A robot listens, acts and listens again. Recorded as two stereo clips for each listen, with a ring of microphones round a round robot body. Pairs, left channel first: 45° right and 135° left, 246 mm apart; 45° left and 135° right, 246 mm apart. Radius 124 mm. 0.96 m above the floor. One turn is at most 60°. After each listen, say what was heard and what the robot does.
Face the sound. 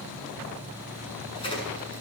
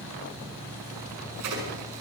The crack: 115° right. Turn 60° right.
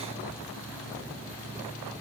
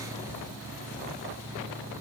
Nothing new. It was at 55° right. Turn 55° right.
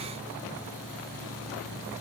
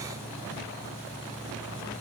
Facing where the crack came from. I can't hear it now.